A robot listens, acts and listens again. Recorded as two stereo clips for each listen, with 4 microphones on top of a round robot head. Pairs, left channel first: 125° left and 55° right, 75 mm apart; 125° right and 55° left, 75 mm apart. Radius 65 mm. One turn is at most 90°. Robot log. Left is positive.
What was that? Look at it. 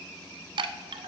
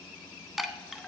note: The chime: 30° right.
cmd yaw -30
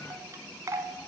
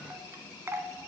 end: Found it: a chime, straight ahead.